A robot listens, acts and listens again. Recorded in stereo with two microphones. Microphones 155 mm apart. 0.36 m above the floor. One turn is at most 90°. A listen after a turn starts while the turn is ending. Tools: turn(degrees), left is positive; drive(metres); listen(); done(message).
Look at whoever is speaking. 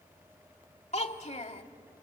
turn(degrees=45)
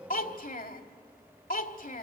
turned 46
turn(degrees=80)
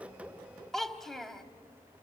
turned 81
done("Found it: a child speaking, straight ahead, 1 to 2 m away.")